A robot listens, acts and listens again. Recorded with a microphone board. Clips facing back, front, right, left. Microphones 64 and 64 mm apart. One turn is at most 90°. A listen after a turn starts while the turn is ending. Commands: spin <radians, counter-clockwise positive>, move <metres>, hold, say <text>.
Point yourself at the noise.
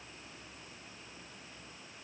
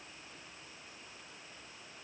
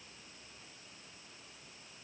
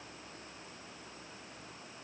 hold
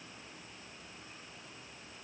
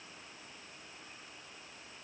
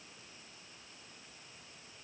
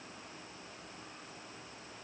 hold
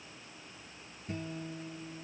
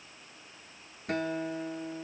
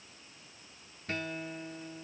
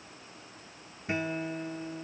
spin 0.26
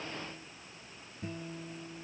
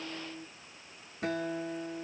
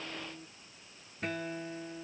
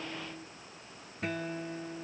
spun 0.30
say Facing the guitar.